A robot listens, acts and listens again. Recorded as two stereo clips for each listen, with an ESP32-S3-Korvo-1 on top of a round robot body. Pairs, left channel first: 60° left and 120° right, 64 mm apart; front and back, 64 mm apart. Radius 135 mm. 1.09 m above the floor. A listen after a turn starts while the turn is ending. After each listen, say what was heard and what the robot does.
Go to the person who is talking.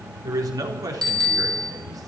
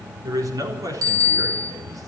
The man speaking: 145° right. Turn 145° right.
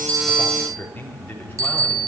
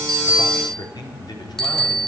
The man speaking is now 10° right. Turn 10° right.
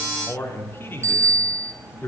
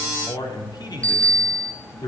Drive 1.0 m forward.
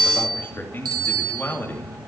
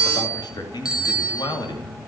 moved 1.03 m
Drive 1.0 m forward.
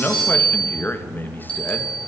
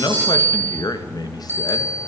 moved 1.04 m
Drive 1.0 m forward.
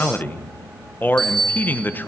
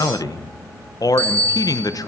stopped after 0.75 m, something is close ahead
Arrived at the man speaking, straight ahead.